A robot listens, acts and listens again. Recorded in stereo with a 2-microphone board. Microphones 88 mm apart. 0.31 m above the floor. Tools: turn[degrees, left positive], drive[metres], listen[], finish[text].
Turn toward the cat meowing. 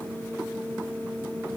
Action: listen[]
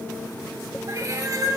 Thought: The cat meowing: about 45° right or 135° right.
Action: turn[-45]
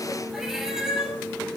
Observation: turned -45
Action: finish[Found it: a cat meowing, straight ahead.]